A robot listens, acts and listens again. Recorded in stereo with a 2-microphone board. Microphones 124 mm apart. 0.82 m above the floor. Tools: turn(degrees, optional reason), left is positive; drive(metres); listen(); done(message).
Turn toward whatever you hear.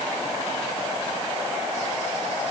listen()
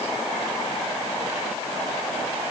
listen()
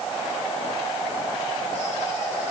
done("I can't make out anything to turn to.")